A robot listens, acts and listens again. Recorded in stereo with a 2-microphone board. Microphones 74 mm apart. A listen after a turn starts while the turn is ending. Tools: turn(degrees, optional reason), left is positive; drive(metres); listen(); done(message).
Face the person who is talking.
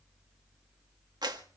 listen()
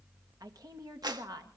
turn(degrees=-55, reason="The woman speaking: about 55° right or 125° right.")
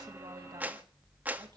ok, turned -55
listen()
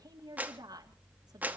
turn(degrees=-60, reason="So it is at 60° right.")
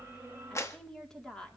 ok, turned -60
turn(degrees=10, reason="The woman speaking is now 10° left.")
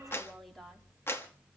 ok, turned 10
done("Found it: a woman speaking, straight ahead.")